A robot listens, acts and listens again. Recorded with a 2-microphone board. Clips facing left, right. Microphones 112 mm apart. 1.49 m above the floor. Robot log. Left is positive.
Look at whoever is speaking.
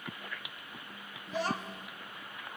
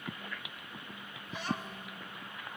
note: The child speaking: about 70° left or 110° left.
cmd yaw +70
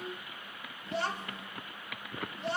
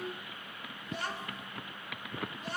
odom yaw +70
note: So it is at 30° left.
cmd yaw +30
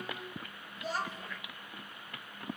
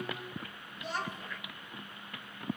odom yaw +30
end: Facing the child speaking, 2 to 4 m away.